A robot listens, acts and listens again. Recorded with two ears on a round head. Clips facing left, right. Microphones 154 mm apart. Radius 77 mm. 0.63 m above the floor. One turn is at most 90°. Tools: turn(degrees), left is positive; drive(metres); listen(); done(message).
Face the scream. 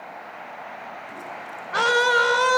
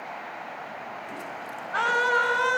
turn(degrees=55)
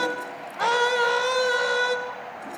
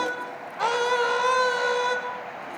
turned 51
done("Found it: a scream, straight ahead, 2 to 4 m away.")